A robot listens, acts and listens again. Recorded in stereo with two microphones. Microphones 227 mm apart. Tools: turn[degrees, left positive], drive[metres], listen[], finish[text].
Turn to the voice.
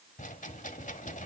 Action: listen[]
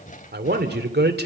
Thought: The man speaking: about 50° right or 130° right.
Action: turn[-50]
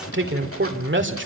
Thought: So it is at 75° right.
Action: turn[-75]
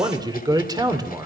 Thought: The man speaking is now 20° right.
Action: turn[-20]
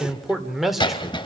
Action: finish[Found it: a man speaking, straight ahead, 2 to 4 m away.]